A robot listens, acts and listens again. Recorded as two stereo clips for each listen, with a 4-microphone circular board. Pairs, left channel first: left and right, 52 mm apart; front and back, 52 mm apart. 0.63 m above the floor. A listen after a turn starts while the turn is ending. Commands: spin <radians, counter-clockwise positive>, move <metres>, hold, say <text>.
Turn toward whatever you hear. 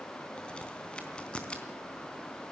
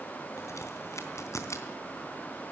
spin 0.35
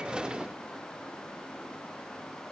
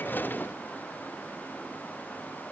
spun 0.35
say I heard a crack from this way, but can't make it out now.